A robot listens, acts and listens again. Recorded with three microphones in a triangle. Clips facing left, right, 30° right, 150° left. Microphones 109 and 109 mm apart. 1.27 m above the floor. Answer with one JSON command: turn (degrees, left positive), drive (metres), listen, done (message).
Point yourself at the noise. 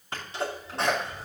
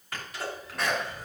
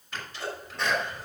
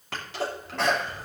{"turn": 150}
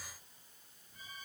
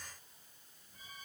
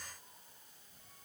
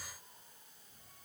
{"done": "I heard a sneeze from this way, but can't make it out now."}